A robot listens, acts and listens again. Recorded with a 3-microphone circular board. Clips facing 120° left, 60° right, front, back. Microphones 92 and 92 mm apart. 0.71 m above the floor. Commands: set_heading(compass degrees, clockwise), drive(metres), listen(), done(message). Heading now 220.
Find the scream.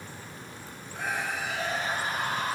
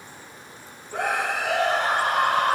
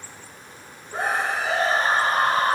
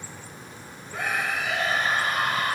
set_heading(275)
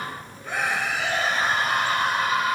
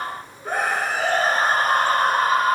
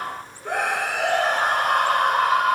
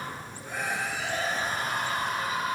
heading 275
set_heading(290)
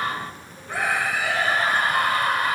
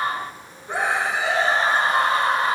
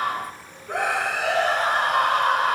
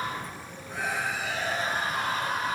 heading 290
done("Facing the scream.")